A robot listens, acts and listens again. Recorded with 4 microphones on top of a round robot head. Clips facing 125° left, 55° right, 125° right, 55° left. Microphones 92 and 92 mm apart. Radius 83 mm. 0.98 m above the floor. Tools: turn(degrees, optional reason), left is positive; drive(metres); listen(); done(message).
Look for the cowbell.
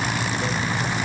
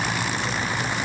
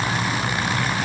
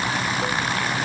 listen()
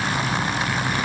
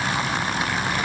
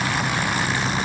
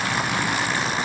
listen()
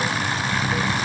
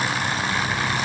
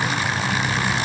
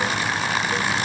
done("I can't make out a cowbell to turn to.")